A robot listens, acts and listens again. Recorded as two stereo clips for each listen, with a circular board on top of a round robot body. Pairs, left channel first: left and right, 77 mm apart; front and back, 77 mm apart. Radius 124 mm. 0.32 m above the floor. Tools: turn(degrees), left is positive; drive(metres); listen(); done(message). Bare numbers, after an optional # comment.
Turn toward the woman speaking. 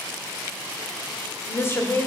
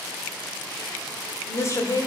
# The woman speaking: 35° left.
turn(35)
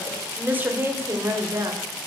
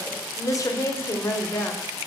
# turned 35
# The woman speaking is now 50° right.
turn(-50)
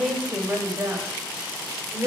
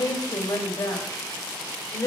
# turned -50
# The woman speaking is now 35° right.
turn(-35)
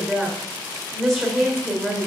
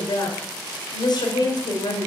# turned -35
done("Facing the woman speaking.")